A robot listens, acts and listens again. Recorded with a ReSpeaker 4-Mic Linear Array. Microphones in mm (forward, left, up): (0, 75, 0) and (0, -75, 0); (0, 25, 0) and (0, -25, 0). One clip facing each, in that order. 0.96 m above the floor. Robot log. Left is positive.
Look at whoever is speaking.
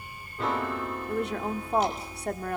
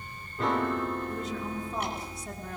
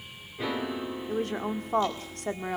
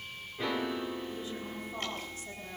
note: The woman speaking: about 70° left or 110° left.
cmd yaw +70
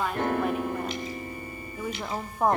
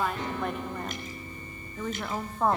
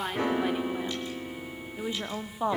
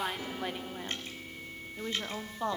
note: So it is at 20° left.
cmd yaw +20
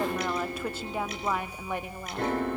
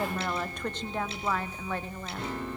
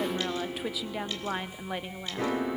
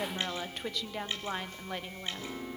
note: The woman speaking is now 15° left.
cmd yaw +15
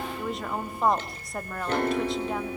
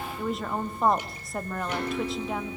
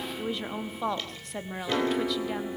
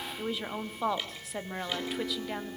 end: Facing the woman speaking.